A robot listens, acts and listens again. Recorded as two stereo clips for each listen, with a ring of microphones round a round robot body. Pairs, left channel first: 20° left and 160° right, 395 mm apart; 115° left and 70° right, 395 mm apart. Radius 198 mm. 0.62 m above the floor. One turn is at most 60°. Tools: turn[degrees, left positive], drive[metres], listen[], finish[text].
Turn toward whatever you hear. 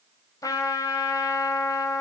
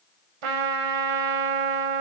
Thought: The trumpet: 60° right.
Action: turn[-60]
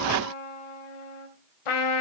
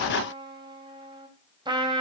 Thought: The trumpet is now 10° left.
Action: turn[10]
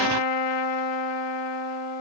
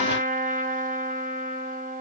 Action: finish[Found it: a trumpet, straight ahead, 2 to 4 m away.]